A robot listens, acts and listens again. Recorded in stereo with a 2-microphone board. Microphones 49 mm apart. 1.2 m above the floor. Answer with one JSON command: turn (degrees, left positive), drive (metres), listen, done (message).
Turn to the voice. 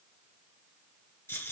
{"listen": true}
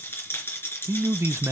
{"turn": -65}
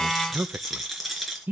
{"turn": -45}
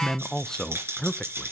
{"turn": 15}
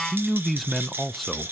{"done": "Facing the man speaking, under 1 m away."}